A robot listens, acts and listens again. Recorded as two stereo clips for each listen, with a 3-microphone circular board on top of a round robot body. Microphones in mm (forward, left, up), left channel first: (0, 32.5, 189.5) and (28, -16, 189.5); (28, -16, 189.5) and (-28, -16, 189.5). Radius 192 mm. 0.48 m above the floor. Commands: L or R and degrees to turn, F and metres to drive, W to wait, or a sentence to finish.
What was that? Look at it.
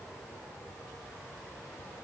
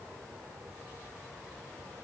W
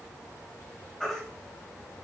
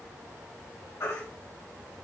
L30
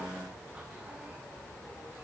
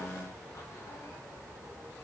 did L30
W
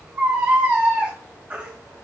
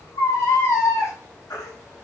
Facing the baby crying, 2 to 4 m away.